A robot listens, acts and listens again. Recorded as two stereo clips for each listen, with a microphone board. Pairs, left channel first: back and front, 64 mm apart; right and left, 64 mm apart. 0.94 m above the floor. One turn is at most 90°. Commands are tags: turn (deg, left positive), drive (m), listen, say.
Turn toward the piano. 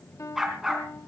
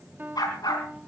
<turn deg="90"/>
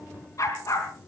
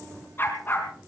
<turn deg="55"/>
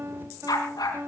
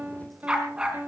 <turn deg="35"/>
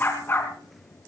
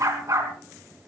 <listen/>
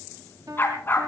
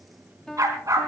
<say>Facing the piano, 2 to 4 m away.</say>